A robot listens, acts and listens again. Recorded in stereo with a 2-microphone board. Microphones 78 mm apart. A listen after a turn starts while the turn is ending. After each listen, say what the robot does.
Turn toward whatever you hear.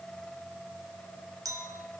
Turn 50° right.
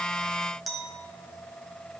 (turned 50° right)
Facing the clink, 1 to 2 m away.